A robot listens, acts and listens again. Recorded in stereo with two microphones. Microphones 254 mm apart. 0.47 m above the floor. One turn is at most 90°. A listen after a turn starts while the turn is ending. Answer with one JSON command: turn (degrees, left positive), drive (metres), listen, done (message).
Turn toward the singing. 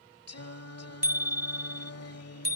{"turn": 90}
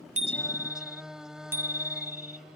{"done": "Found it: singing, straight ahead."}